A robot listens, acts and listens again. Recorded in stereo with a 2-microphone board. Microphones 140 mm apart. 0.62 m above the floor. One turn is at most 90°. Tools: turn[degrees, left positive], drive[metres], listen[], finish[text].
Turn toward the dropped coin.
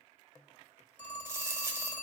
Thought: The dropped coin: about 20° right or 160° right.
Action: turn[-20]
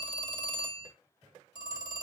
Action: listen[]
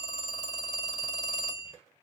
Action: finish[I heard a dropped coin, but can't make it out now. It was about straight ahead or 140° right.]